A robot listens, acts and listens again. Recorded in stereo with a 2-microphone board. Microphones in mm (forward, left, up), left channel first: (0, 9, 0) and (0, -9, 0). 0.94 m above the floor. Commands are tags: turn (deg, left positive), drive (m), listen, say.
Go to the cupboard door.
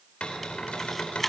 <turn deg="90"/>
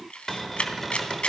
<turn deg="15"/>
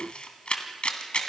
<listen/>
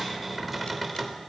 <drive m="1.0"/>
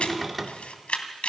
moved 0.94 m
<drive m="1.0"/>
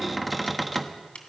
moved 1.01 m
<drive m="1.0"/>
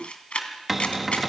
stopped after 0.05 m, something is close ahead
<turn deg="-10"/>
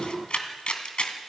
<listen/>
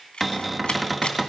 <say>Arrived at the cupboard door, straight ahead.</say>